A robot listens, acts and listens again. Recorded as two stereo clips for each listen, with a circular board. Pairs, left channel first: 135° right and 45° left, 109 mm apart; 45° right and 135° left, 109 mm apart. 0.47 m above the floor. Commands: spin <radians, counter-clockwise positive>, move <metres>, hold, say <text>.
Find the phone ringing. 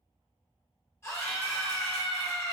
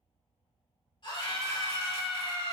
hold
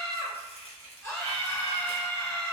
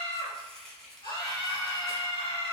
hold
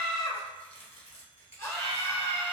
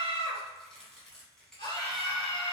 say I can't make out a phone ringing, only a scream and chopping.